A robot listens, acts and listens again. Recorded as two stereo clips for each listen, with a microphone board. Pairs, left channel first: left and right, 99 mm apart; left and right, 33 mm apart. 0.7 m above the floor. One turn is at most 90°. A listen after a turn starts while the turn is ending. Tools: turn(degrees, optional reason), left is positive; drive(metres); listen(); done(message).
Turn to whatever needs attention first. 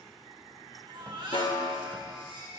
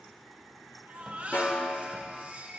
turn(degrees=-55, reason="The baby crying: about 55° right or 125° right.")
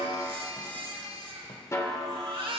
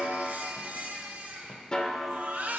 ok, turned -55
turn(degrees=-70, reason="So it is at 70° right.")
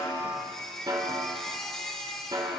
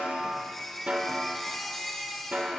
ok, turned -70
done("Facing the baby crying.")